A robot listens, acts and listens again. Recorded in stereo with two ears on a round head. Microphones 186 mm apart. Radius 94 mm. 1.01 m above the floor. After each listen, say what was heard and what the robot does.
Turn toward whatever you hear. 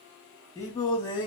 The singing: about 25° left or 155° left. Turn 25° left.
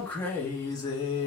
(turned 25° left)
The singing: about 25° left or 155° left. Turn 25° left.
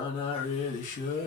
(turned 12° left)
The singing: about 45° left or 135° left. Turn 45° left.
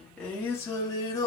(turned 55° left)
So it is at 20° left. Turn 20° left.
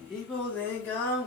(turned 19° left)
The singing is now 10° left. Turn 10° left.
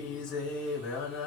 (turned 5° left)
Found it: singing, straight ahead.